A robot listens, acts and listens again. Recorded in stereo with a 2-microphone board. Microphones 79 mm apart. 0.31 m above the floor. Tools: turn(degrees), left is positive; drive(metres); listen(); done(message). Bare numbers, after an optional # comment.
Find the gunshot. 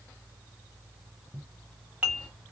listen()
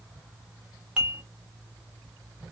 listen()
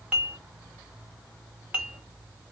done("I can't make out a gunshot, only dishes clattering.")